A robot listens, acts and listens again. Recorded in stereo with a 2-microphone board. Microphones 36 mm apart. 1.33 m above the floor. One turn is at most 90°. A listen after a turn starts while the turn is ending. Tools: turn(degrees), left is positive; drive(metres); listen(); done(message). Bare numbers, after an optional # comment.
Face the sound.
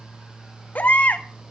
# The baby crying: about 45° left or 135° left.
turn(45)
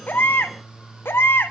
# So it is at 90° left.
turn(90)
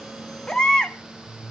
# The baby crying is now 20° left.
turn(20)
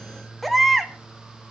done("Facing the baby crying, 1 to 2 m away.")